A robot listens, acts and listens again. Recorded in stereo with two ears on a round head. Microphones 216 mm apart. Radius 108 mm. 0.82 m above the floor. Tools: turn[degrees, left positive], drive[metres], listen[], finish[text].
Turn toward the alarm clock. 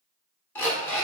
Action: turn[30]
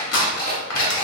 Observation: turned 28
Thought: So it is at 140° left.
Action: turn[140]
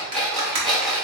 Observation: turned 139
Action: finish[Found it: an alarm clock, straight ahead, 1 to 2 m away.]